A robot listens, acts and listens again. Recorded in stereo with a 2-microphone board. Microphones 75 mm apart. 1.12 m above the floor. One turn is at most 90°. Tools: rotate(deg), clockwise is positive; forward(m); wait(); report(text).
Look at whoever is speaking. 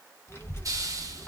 rotate(-35)
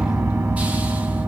wait()
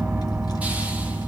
rotate(-90)
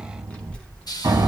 rotate(-15)
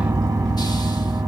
wait()
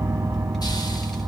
report("Found it: a child speaking, straight ahead.")